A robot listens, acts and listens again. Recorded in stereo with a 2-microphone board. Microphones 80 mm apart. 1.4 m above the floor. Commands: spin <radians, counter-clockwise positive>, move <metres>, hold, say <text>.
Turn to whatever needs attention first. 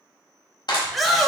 spin 0.52
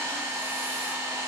hold
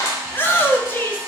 spin 2.62
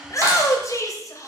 spin 0.87
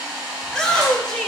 spin 0.17
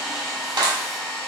hold
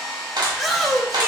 say Facing the shout, under 1 m away.